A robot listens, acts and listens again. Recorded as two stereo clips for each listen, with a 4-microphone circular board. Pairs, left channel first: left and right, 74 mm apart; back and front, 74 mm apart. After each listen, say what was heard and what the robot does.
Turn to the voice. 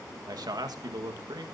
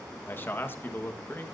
The man speaking: 120° right. Turn 120° right.
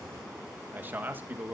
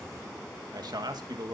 The man speaking is now 25° right. Turn 25° right.
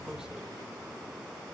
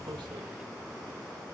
Keep listening.
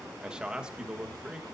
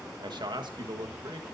The man speaking is now 10° right. Turn 10° right.
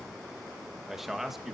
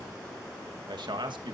Found it: a man speaking, straight ahead.